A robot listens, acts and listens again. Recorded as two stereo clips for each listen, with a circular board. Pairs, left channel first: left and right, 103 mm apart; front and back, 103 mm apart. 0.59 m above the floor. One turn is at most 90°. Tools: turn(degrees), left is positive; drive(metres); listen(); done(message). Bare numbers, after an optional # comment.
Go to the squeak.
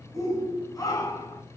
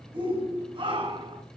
listen()
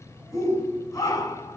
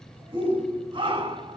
listen()
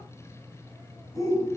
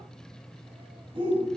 done("I can't make out a squeak, only a shout.")